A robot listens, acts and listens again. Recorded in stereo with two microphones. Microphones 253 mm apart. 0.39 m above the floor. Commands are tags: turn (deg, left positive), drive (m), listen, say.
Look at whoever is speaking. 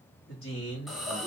<turn deg="55"/>
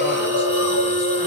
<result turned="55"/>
<listen/>
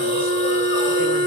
<listen/>
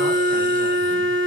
<say>I heard a man speaking, but can't make it out now. It was about straight ahead or 70° left.</say>